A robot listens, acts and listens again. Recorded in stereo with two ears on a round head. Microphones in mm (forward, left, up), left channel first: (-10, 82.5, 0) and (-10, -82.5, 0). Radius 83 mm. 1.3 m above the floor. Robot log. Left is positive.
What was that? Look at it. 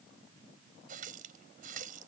note: The running tap: about 45° right or 135° right.
cmd yaw -45
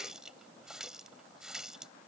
end: Facing the running tap.